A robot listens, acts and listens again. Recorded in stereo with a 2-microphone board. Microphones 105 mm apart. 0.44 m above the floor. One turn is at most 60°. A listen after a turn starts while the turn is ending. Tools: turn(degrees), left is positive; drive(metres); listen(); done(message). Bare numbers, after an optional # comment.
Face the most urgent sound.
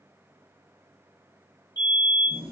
# The fire alarm: about 40° left or 140° left.
turn(40)
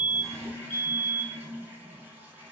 # So it is at 10° left.
turn(10)
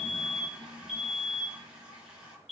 done("Found it: a fire alarm, straight ahead, 2 to 4 m away.")